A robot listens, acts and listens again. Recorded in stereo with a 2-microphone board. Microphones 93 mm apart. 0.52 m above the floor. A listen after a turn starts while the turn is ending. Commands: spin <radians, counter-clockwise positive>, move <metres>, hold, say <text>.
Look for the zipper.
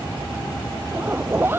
spin -0.44
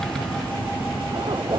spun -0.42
spin -2.27
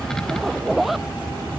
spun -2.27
say Found it: a zipper, straight ahead.